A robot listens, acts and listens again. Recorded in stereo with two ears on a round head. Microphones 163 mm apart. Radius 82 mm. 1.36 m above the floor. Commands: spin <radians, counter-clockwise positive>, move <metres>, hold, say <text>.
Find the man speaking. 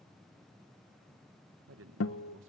spin -1.57
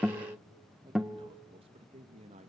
spin -0.61
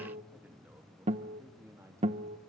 spin -0.26
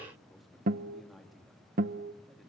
say Facing the man speaking, 2 to 4 m away.